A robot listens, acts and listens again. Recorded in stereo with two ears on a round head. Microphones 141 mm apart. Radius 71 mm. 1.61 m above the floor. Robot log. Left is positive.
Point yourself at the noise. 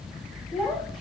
cmd yaw +30
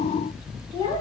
note: So it is at 150° left.
cmd yaw +150
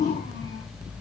cmd idle
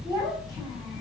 note: The child speaking is now 25° right.
cmd yaw -25
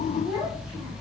end: Facing the child speaking.